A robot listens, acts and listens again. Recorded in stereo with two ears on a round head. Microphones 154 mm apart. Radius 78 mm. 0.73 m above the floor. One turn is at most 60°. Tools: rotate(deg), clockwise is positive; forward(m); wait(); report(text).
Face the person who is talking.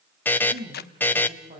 rotate(30)
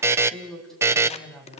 report("Found it: a woman speaking, straight ahead.")